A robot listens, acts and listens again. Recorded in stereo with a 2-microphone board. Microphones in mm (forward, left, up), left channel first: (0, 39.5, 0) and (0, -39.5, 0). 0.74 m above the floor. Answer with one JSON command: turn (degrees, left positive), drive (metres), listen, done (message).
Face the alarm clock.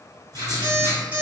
{"turn": -70}
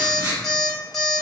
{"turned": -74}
{"done": "Found it: an alarm clock, straight ahead."}